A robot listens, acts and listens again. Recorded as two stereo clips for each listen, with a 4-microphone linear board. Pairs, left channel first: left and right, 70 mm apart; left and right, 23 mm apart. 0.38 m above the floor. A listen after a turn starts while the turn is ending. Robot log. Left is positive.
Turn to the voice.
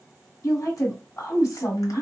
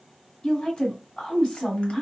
note: The woman speaking: about 55° left or 125° left.
cmd yaw +55
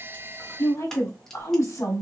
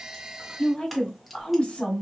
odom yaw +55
note: So it is at 55° left.
cmd yaw +55
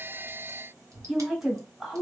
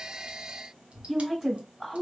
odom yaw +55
note: The woman speaking is now 10° right.
cmd yaw -10
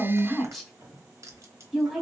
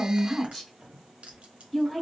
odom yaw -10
end: Found it: a woman speaking, straight ahead.